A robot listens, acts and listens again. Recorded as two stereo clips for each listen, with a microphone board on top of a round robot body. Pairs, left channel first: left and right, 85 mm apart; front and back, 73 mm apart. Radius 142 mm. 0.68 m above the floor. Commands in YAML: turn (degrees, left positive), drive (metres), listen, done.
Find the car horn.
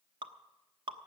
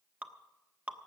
listen: true
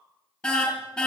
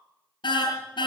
done: "Facing the car horn, 2 to 4 m away."